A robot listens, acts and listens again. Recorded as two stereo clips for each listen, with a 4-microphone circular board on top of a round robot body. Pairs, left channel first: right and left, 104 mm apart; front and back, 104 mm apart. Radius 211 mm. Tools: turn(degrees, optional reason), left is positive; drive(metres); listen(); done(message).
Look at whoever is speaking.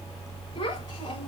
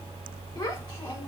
turn(degrees=-60, reason="The child speaking: 60° right.")
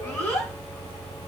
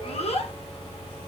turn(degrees=-20, reason="The child speaking is now 20° right.")
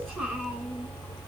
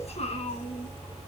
done("Found it: a child speaking, straight ahead, 2 to 4 m away.")